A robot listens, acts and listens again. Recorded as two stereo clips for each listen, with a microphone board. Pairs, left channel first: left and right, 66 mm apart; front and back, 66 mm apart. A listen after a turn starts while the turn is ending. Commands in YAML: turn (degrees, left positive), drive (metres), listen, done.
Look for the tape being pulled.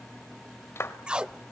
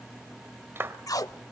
turn: -15
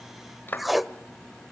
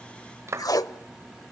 done: "Facing the tape being pulled."